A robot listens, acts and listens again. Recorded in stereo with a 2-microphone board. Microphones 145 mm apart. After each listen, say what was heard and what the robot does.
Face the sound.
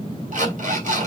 The alarm clock: about 60° right or 120° right. Turn 60° right.
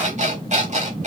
So it is at 55° right. Turn 55° right.
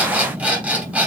The alarm clock is now 10° right. Turn 10° right.
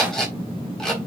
Facing the alarm clock.